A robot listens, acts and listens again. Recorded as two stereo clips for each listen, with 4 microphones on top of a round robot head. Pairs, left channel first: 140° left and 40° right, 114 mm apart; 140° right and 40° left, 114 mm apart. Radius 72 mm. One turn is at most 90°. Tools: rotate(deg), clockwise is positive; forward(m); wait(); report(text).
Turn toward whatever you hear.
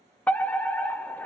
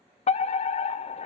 rotate(90)
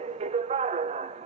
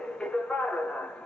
rotate(55)
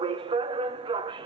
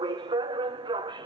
report("Found it: a fire alarm, straight ahead, 1 to 2 m away.")